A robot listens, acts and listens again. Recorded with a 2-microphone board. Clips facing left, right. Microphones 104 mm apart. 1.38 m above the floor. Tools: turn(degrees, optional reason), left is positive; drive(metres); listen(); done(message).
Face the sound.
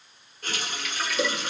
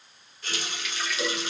turn(degrees=45, reason="The running tap: about 45° left or 135° left.")
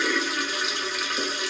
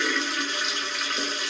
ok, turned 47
done("Facing the running tap, under 1 m away.")